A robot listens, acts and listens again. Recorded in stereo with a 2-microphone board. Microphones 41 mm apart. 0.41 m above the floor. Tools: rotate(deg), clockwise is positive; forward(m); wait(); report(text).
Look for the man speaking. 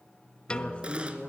rotate(-25)
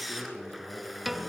wait()
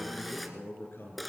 rotate(-125)
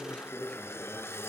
wait()
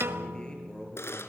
rotate(-20)
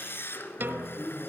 report("Facing the man speaking.")